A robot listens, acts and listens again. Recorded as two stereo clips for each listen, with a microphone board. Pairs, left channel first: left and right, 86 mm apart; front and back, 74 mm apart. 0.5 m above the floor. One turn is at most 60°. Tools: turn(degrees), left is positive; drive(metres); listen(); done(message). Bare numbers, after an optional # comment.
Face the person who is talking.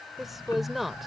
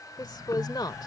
done("Found it: a woman speaking, straight ahead.")